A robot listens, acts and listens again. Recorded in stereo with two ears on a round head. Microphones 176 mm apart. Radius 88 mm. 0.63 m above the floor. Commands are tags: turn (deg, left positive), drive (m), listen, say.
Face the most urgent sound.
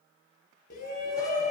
<turn deg="50"/>
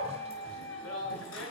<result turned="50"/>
<turn deg="80"/>
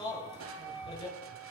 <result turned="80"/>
<turn deg="25"/>
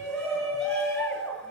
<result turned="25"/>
<say>Found it: a shout, straight ahead, over 4 m away.</say>